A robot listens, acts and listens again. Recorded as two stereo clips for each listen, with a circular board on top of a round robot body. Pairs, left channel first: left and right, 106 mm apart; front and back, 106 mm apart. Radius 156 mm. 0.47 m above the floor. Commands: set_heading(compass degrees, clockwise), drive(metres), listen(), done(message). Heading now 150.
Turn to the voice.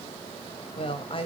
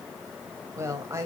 set_heading(30)
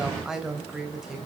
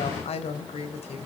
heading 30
done("Found it: a woman speaking, straight ahead.")